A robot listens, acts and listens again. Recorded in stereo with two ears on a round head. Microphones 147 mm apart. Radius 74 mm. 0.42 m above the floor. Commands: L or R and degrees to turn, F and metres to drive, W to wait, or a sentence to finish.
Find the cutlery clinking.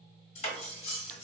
L40
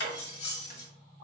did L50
L85
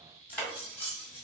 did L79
L10
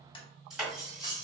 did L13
Facing the cutlery clinking, 1 to 2 m away.